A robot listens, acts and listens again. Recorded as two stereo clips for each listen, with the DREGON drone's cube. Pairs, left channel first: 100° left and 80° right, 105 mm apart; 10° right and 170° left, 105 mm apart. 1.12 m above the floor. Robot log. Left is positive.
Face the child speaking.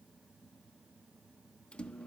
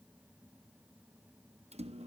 cmd idle
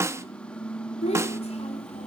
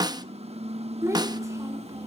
note: The child speaking: 110° left.
cmd yaw +110
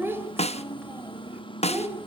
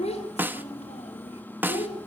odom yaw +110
note: The child speaking is now 10° right.
cmd yaw -10
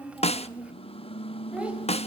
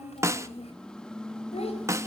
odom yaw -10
end: Found it: a child speaking, straight ahead, 2 to 4 m away.